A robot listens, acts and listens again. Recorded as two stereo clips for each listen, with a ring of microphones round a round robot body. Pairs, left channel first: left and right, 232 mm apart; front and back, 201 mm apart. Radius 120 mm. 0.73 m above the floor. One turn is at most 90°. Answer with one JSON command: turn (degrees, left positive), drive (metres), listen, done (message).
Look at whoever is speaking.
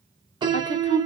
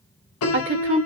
{"turn": 90}
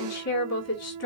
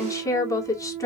{"turn": 75}
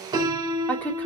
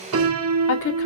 {"done": "Facing the woman speaking."}